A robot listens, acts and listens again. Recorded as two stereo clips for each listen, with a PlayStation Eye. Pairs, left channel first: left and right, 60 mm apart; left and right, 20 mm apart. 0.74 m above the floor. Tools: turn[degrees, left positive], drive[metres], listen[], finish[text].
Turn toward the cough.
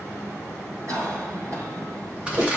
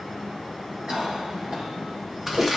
Thought: The cough: about 60° right or 120° right.
Action: turn[-60]
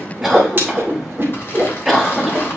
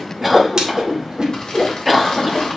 Action: finish[Found it: a cough, straight ahead, over 4 m away.]